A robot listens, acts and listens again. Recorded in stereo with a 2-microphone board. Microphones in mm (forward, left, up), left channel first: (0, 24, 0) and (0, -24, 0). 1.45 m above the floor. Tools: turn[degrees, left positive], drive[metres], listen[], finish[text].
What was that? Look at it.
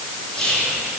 Thought: The whispering: about 15° left or 165° left.
Action: turn[15]
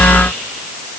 Action: listen[]
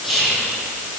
Action: finish[Found it: whispering, straight ahead, 2 to 4 m away.]